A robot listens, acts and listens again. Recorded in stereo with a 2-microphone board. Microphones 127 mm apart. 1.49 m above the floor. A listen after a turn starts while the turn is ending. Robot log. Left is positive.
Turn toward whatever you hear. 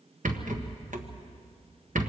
cmd yaw -90
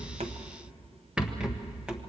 end: Found it: a rattle, straight ahead.